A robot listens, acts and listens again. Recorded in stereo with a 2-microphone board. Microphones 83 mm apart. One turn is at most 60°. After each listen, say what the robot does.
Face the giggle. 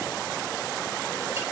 Keep listening.
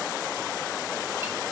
Keep listening.
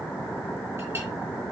I can't make out a giggle.